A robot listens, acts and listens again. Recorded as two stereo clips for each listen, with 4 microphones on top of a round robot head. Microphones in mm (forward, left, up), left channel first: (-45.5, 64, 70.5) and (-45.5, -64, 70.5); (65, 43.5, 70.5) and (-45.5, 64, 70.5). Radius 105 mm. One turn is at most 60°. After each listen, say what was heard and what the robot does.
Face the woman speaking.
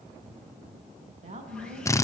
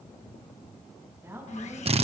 The woman speaking: 120° right. Turn 60° right.
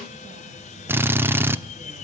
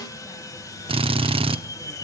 Nothing new. It was at 60° right. Turn 60° right.
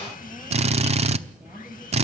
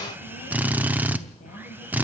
Keep listening.
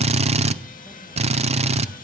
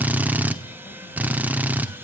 I heard a woman speaking from this way, but can't make it out now.